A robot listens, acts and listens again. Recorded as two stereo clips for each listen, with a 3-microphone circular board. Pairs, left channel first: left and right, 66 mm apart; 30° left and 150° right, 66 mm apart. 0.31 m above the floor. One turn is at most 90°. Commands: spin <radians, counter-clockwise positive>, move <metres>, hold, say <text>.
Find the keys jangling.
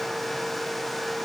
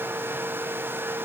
hold
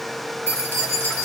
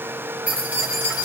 spin 1.57
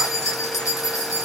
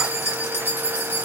spin 1.40
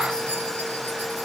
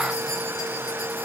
hold
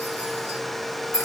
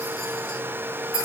spin 0.87
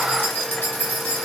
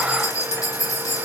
spin 0.61
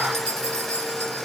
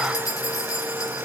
spin 0.17
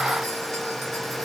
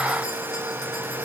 hold
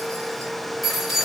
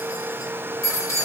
say Found it: keys jangling, straight ahead.